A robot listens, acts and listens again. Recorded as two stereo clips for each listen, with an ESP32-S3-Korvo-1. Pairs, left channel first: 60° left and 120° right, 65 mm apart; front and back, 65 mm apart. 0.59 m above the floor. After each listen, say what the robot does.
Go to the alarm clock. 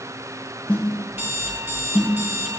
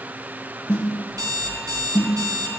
Turn 175° left.
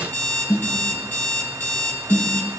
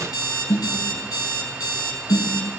Turn 10° right.
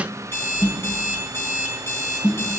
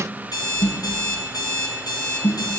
Drive 1.0 m forward.
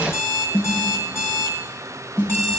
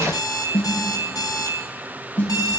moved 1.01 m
Drive 1.0 m forward.
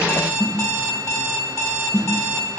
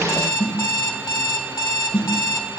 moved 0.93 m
Turn 10° left.
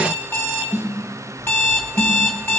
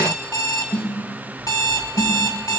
Drive 1.0 m forward.
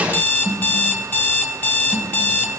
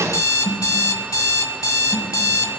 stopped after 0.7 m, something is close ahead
Arrived at the alarm clock, straight ahead.